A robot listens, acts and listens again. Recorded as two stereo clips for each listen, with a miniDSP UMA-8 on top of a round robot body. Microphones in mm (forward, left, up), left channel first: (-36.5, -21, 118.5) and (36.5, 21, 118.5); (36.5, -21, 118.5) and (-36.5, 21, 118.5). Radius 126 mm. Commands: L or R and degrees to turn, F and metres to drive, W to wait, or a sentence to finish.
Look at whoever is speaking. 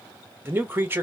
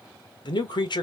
R30
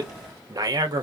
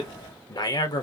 Found it: a man speaking, straight ahead.